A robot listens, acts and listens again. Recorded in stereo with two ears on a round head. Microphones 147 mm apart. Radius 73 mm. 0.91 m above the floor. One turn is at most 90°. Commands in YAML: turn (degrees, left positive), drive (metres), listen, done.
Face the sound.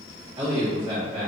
turn: -30
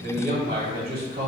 turn: -90
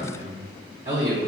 turn: -55
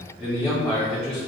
done: "Found it: a man speaking, straight ahead, 1 to 2 m away."